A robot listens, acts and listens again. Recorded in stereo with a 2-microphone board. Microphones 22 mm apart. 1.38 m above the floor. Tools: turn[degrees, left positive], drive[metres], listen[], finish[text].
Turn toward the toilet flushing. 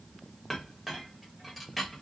Action: listen[]
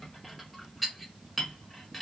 Action: listen[]
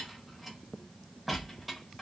Action: finish[I can't make out a toilet flushing to turn to.]